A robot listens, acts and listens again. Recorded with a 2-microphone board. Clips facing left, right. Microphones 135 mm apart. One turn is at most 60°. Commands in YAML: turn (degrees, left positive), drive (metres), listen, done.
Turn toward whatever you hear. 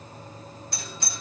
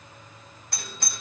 turn: -55
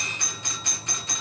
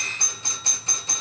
turn: -40
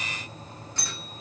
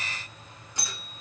turn: -15
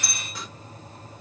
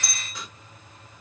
done: "Facing the doorbell."